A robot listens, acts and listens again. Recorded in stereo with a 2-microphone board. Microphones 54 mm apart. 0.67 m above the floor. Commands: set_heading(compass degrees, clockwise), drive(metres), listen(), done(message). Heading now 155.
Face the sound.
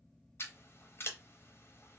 set_heading(105)
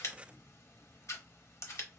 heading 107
set_heading(32)
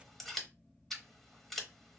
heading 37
done("Facing the scissors.")